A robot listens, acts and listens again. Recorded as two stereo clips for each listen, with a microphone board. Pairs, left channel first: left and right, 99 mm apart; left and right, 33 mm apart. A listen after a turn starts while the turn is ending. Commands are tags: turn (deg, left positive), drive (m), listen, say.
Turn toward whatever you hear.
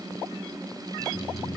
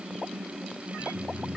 <turn deg="70"/>
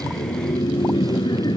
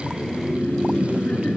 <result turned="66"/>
<turn deg="50"/>
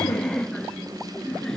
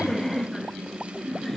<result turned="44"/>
<say>Found it: laughter, straight ahead.</say>